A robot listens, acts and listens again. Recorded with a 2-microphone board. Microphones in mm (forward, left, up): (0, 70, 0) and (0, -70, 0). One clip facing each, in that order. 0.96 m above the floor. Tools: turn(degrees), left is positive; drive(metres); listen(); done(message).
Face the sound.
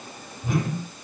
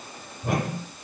turn(degrees=-65)
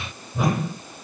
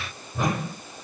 done("Facing the whoosh, over 4 m away.")